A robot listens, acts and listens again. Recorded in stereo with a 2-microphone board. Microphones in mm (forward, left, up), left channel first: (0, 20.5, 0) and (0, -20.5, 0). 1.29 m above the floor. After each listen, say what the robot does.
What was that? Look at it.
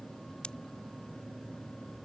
Turn 20° left.
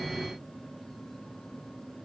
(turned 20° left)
Keep listening.
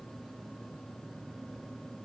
I heard a pop, but can't make it out now. It was about straight ahead or 140° left.